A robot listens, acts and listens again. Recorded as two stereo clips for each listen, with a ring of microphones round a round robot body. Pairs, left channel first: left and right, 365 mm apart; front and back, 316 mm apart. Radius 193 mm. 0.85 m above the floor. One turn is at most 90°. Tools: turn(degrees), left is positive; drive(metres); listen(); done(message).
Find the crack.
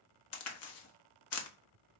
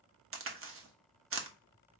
turn(degrees=90)
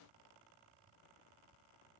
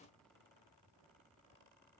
turn(degrees=45)
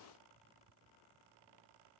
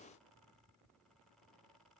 done("Facing where the crack came from. I can't hear it now.")